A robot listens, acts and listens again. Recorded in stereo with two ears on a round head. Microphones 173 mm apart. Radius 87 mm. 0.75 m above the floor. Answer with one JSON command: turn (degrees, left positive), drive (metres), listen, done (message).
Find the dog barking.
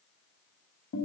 {"listen": true}
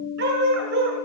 {"turn": -60}
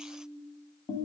{"listen": true}
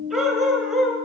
{"done": "Found it: a dog barking, straight ahead, 2 to 4 m away."}